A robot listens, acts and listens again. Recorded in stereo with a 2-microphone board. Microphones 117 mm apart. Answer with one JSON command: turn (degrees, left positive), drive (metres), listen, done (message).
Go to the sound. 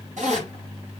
{"turn": -90}
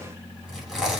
{"drive": 1.0}
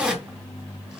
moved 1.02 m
{"drive": 1.0}
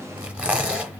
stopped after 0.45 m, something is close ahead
{"turn": -10}
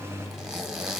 {"done": "I am next to the zipper."}